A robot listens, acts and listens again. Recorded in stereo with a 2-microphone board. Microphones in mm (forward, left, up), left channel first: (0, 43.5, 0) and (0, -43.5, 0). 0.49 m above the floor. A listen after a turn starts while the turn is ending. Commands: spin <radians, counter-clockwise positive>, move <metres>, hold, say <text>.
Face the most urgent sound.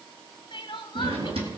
spin 1.13
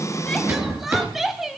say Facing the crying.